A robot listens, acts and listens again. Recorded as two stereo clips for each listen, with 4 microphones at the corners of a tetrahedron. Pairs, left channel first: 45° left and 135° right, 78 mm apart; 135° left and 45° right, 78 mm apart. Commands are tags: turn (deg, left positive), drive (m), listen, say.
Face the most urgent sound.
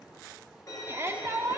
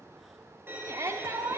<turn deg="-85"/>
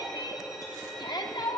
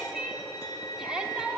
<turn deg="35"/>
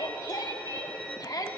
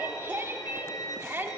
<turn deg="15"/>
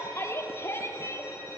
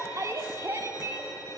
<say>Facing the shout.</say>